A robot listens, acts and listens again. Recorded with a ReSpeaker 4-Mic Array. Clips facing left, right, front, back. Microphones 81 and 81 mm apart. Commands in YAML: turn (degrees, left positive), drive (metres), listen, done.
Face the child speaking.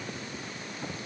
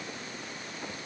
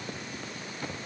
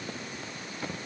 listen: true
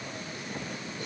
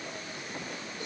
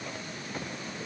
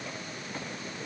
listen: true
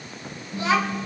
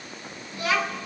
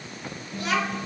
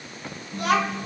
turn: 160
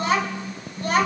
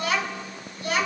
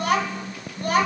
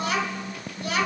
turn: 45
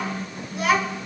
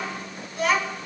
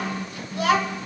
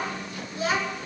turn: 10
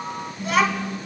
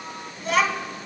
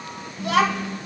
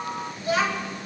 done: "Facing the child speaking, 2 to 4 m away."